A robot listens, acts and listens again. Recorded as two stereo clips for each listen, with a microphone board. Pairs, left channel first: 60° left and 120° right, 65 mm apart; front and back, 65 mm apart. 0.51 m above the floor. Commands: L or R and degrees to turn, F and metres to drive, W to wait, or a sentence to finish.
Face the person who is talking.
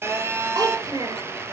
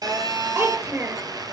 R130
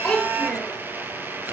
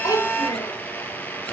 R25
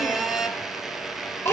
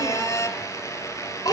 Found it: a child speaking, straight ahead.